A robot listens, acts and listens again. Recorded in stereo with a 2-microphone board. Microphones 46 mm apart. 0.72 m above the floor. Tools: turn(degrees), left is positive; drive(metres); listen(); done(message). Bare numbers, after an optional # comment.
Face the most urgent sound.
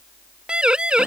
# The siren: about 20° right or 160° right.
turn(-20)
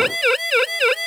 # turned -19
done("Facing the siren.")